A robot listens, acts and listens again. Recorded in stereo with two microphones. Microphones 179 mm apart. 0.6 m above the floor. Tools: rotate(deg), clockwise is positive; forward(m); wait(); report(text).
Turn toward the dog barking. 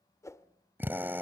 wait()
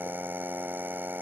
wait()
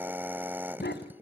rotate(-75)
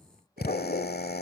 rotate(-55)
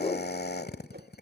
rotate(-35)
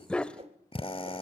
report("Facing the dog barking, 1 to 2 m away.")